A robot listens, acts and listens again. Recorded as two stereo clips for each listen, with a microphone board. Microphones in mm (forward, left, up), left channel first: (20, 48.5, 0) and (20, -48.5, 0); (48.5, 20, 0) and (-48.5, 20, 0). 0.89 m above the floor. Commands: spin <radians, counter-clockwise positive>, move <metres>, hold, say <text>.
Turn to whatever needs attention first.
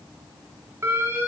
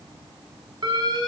spin -2.53
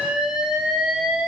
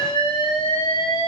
spin -0.17
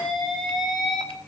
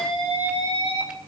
say Facing the alarm.